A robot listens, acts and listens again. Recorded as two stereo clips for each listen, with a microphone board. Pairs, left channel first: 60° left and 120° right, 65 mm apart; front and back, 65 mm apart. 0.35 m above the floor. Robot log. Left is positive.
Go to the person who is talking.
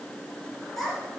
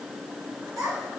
note: The child speaking: 145° left.
cmd yaw +145
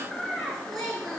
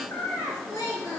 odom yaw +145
note: The child speaking is now 30° right.
cmd yaw -30
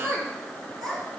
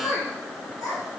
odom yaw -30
note: The child speaking is now 25° right.
cmd yaw -25
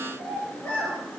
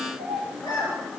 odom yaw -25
note: The child speaking is now 10° right.
cmd yaw -10
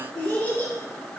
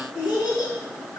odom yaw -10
cmd fwd 1.0
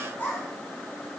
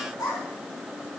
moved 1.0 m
cmd fwd 1.0
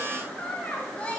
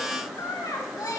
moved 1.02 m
cmd fwd 1.0
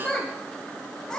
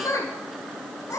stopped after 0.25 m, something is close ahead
note: The child speaking is now 15° right.
cmd yaw -15
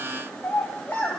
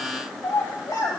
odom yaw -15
end: Arrived at the child speaking, straight ahead.